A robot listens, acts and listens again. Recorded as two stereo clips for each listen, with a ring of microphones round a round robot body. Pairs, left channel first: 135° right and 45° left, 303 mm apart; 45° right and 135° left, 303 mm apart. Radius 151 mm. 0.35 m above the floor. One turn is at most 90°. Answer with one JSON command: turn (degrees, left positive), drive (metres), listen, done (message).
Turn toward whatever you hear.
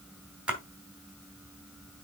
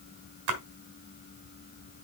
{"turn": 90}
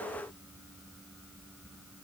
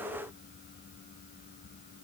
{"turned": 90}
{"turn": 40}
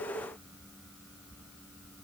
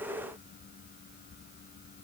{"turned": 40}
{"done": "Facing where the splash came from. I can't hear it now."}